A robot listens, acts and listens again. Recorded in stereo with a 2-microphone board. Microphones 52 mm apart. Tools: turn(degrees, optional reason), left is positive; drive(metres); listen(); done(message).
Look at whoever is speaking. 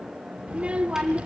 turn(degrees=-20, reason="The child speaking: about 20° right or 160° right.")
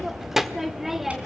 done("Found it: a child speaking, straight ahead.")